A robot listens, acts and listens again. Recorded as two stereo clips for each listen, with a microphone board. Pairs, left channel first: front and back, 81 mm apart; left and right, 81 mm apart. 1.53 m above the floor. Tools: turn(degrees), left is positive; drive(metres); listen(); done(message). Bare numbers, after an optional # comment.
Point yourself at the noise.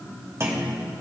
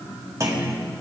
# The clunk: 130° right.
turn(-130)
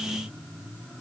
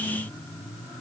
done("Facing where the clunk came from. I can't hear it now.")